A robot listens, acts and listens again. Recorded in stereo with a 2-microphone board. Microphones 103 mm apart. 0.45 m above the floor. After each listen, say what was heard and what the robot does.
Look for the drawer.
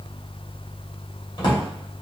The drawer: about 45° left or 135° left. Turn 45° left.
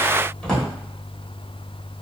So it is at 10° left. Turn 10° left.
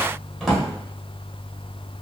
Found it: a drawer, straight ahead.